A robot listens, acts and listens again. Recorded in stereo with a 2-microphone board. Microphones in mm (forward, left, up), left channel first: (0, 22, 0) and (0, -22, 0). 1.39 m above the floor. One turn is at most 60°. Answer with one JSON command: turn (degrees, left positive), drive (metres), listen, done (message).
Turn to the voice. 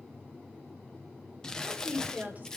{"turn": -35}
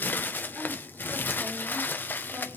{"listen": true}
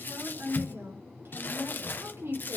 {"turn": -60}
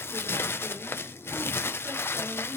{"turn": -50}
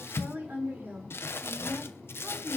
{"turn": -45}
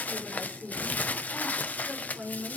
{"turn": -15}
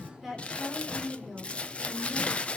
{"done": "Facing the woman speaking, over 4 m away."}